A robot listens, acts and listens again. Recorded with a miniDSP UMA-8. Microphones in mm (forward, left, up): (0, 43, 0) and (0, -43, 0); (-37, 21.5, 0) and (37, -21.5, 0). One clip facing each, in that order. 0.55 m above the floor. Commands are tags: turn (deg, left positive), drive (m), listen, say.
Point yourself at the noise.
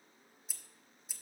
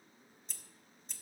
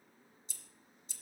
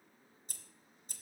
<say>Found it: scissors, straight ahead, under 1 m away.</say>